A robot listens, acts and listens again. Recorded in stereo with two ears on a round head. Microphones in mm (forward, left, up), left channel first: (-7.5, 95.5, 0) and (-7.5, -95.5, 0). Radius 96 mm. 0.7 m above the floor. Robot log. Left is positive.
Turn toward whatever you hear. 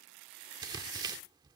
note: The tearing paper: about 20° right or 160° right.
cmd yaw -20
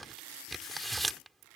end: Found it: tearing paper, straight ahead.